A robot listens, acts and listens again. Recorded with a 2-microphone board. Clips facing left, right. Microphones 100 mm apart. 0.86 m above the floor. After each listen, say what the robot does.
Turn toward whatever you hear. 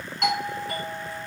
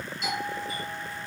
Turn 70° left.
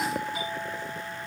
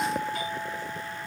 Found it: a doorbell, straight ahead, over 4 m away.